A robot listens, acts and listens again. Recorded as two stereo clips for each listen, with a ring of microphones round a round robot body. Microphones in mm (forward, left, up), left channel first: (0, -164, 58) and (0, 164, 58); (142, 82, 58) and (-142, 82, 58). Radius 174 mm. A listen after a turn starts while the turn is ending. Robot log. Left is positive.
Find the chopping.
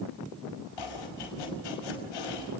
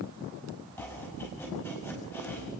note: The chopping: 85° right.
cmd yaw -85
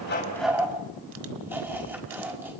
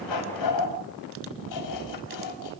end: Found it: chopping, straight ahead, over 4 m away.